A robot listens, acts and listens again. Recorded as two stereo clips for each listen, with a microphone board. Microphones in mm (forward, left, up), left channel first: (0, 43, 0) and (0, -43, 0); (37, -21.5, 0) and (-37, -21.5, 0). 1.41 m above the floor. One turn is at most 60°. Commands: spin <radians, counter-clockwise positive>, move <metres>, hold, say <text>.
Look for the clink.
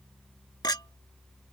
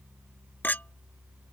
spin 1.05
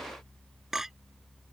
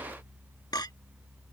say Found it: a clink, straight ahead.